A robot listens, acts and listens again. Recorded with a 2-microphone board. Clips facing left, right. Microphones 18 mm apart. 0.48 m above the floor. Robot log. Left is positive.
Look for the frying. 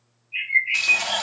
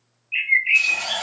note: The frying: about 45° left or 135° left.
cmd yaw +45
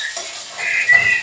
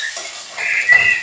end: Found it: frying, straight ahead, 1 to 2 m away.